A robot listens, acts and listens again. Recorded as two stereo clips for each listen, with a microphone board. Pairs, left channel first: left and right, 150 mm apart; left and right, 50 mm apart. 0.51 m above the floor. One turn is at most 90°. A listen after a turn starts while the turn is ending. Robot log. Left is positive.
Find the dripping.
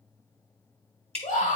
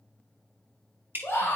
note: The dripping: about 45° right or 135° right.
cmd yaw -45
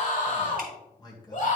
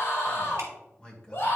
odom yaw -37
cmd idle
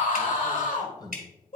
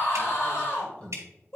note: So it is at 95° right.
cmd yaw -90
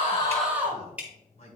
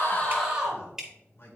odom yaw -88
note: The dripping is now 10° right.
cmd yaw -10
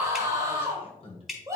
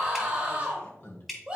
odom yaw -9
end: Found it: dripping, straight ahead, 1 to 2 m away.